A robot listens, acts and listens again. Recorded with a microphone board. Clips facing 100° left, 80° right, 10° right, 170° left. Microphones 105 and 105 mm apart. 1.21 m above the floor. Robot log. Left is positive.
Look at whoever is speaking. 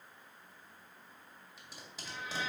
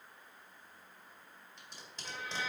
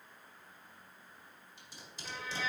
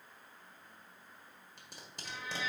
cmd idle
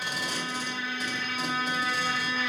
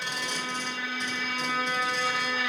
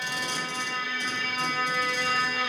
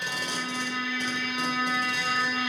cmd idle
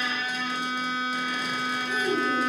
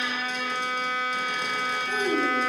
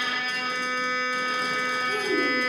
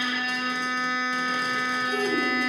note: The child speaking: 110° right.
cmd yaw -110
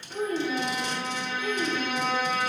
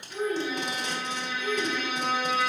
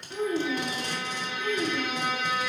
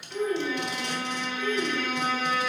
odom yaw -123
note: The child speaking is now 20° left.
cmd yaw +20
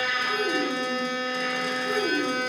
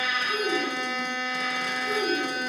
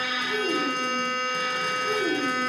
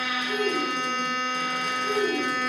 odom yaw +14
end: Found it: a child speaking, straight ahead.